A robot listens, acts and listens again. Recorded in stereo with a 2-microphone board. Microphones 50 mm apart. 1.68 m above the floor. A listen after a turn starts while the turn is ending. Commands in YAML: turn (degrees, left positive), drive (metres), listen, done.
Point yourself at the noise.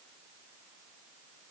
listen: true
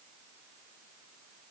listen: true
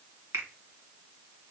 turn: -70
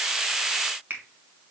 turn: -35
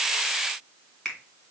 turn: 15
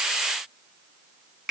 done: "Found it: a finger snap, straight ahead, 2 to 4 m away."